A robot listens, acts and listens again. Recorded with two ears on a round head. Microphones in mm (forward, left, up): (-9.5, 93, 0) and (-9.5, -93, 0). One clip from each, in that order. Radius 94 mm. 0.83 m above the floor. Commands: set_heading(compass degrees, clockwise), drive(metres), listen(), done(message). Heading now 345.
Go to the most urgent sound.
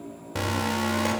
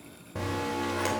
set_heading(255)
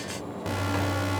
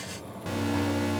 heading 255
drive(1.0)
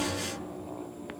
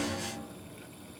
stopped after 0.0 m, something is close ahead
set_heading(245)
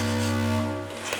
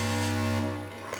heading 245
done("Something is in my way. I am facing the alarm but have not reached it.")